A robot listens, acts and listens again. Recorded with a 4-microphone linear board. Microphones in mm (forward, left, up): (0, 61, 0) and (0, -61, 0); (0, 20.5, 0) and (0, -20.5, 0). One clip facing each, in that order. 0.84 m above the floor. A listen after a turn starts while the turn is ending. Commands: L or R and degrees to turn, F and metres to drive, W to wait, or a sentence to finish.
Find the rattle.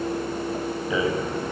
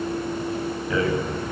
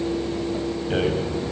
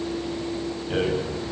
L15
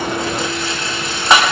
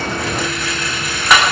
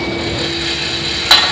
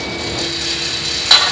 L150
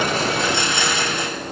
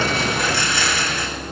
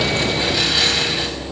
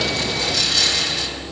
L20
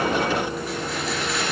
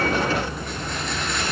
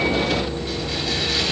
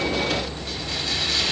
W
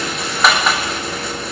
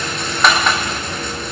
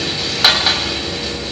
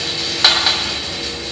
Found it: a rattle, straight ahead.